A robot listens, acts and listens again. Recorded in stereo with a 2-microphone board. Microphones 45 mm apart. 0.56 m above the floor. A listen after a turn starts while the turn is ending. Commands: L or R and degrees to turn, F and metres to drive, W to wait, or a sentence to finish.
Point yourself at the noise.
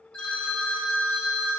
L20
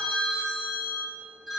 Facing the phone ringing.